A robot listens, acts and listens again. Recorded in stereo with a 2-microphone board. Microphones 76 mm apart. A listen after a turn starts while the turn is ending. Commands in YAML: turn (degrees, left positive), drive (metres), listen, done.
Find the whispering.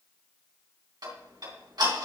listen: true
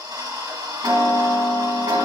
listen: true
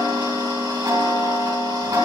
done: "I can't make out whispering, only ticking."